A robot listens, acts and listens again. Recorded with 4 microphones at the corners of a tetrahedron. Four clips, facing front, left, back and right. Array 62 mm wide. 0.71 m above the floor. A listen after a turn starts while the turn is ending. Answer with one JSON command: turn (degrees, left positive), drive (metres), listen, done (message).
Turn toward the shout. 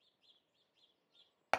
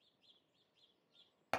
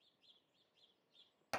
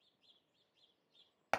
{"listen": true}
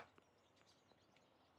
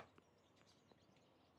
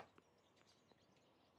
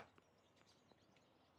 {"listen": true}
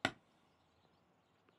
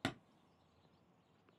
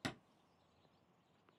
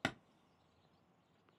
{"done": "I can't make out a shout, only hammering."}